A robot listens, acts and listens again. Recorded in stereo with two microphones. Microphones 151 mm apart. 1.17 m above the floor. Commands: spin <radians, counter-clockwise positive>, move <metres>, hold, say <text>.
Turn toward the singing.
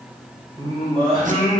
spin -0.70
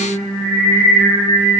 spin -0.26
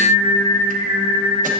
say Facing the singing.